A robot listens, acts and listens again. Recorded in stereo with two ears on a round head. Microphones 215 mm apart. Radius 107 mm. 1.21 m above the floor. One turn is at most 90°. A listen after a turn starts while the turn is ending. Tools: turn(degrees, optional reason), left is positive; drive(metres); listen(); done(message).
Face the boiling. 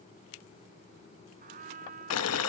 turn(degrees=70, reason="The boiling: about 70° left or 110° left.")
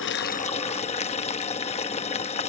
turn(degrees=30, reason="So it is at 30° left.")
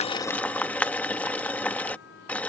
done("Facing the boiling.")